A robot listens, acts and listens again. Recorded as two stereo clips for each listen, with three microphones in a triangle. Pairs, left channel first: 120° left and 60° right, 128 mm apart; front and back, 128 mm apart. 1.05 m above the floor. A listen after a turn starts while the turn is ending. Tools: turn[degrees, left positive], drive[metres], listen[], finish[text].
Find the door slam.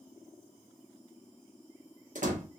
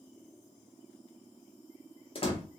Thought: The door slam: 45° right.
Action: turn[-45]
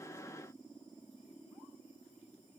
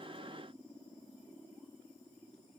Action: finish[Facing where the door slam came from. I can't hear it now.]